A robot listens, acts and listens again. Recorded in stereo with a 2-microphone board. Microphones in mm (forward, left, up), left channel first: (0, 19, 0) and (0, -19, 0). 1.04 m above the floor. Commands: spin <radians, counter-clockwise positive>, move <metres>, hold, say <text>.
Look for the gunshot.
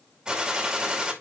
spin -0.44
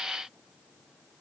hold
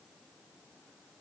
say I heard a gunshot, but can't make it out now. It was about straight ahead or 130° right.